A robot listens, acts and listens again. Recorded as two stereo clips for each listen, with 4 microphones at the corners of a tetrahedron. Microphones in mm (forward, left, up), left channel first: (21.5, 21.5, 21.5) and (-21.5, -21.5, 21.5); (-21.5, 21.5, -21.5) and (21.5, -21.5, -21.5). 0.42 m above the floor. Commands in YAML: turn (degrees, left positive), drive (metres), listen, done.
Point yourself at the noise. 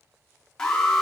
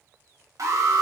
turn: -35
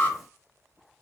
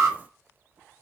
turn: -10
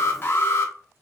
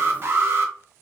done: "Facing the alarm."